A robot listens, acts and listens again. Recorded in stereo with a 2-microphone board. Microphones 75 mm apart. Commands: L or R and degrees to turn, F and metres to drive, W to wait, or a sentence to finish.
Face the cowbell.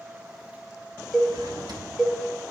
L30
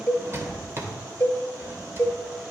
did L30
L150
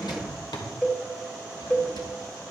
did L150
L10
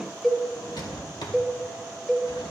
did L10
Facing the cowbell, 1 to 2 m away.